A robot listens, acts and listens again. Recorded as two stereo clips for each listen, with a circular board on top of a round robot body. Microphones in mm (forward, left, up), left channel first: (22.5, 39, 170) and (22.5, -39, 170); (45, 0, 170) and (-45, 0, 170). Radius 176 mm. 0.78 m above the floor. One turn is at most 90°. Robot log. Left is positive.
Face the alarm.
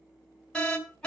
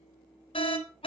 note: The alarm: 10° left.
cmd yaw +10
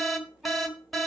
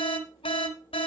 end: Found it: an alarm, straight ahead.